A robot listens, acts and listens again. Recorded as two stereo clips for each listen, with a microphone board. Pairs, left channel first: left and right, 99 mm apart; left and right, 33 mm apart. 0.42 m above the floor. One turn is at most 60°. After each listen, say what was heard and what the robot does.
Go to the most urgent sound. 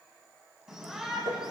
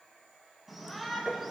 Turn 30° right.
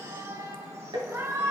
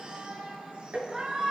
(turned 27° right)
So it is at 145° right. Turn 60° right.
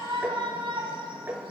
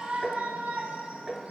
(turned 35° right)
The shout is now 110° right. Turn 60° right.
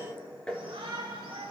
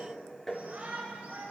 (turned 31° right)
The shout is now 80° right. Turn 60° right.
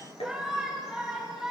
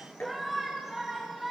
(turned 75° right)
Drive 1.0 m forward.
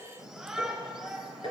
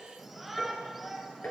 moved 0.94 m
Drive 1.0 m forward.
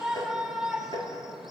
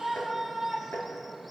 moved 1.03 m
Drive 1.0 m forward.
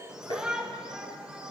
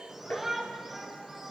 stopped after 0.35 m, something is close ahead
The shout is now 10° right. Turn 10° right.
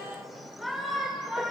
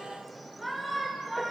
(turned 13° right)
Arrived at the shout, straight ahead.